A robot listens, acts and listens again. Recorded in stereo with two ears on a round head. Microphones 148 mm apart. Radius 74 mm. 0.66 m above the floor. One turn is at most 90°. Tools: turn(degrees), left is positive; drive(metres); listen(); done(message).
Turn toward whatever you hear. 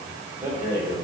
turn(degrees=-20)
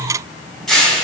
done("Found it: a rattle, straight ahead.")